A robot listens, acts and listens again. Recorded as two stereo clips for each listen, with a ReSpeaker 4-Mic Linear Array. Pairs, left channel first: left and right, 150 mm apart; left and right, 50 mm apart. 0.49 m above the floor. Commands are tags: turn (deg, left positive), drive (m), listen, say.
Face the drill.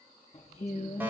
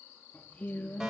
<listen/>
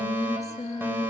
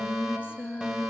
<listen/>
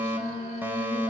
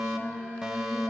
<say>I can't make out a drill, only a fire alarm and singing.</say>